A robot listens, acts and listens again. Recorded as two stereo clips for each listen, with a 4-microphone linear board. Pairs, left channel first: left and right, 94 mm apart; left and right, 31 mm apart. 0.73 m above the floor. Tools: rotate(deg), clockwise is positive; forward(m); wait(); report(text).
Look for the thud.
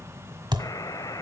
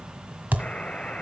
rotate(55)
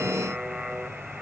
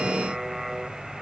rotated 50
wait()
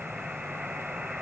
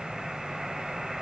report("I heard a thud, but can't make it out now. It was about 5° right or 75° right.")